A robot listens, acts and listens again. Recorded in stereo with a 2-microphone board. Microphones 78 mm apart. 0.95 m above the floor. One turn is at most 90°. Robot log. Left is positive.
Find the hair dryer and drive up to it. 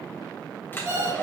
note: The hair dryer: about 25° left or 155° left.
cmd yaw +25
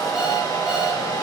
note: So it is at 130° left.
cmd yaw +90
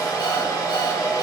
note: The hair dryer is now 50° left.
cmd yaw +50
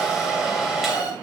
cmd fwd 1.0
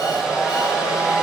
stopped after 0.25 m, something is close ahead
end: Blocked. The hair dryer is further on, straight ahead.